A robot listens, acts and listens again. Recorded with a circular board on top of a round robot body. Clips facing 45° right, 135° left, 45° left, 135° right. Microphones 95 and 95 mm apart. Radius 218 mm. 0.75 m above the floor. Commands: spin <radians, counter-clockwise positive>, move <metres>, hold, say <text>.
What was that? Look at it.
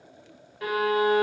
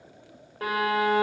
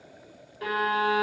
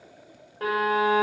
spin -3.05
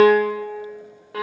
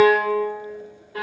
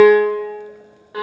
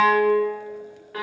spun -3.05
spin -0.44
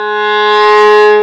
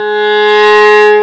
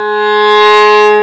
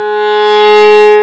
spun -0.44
spin 0.26
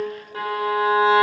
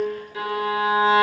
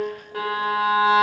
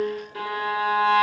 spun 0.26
say Facing the violin, under 1 m away.